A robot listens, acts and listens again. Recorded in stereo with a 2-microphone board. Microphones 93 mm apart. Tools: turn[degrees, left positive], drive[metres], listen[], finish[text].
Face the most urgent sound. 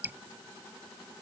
Action: listen[]
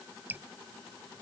Action: listen[]
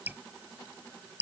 Action: finish[I can't make out anything urgent, only dripping.]